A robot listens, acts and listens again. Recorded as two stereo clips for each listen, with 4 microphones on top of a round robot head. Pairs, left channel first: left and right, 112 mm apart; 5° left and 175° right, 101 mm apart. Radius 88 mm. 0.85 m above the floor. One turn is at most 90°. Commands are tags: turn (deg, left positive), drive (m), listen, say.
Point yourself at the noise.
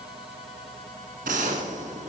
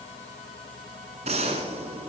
<turn deg="-90"/>
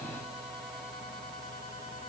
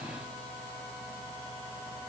<turn deg="-35"/>
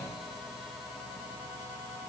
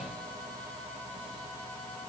<say>Facing where the gunshot came from. I can't hear it now.</say>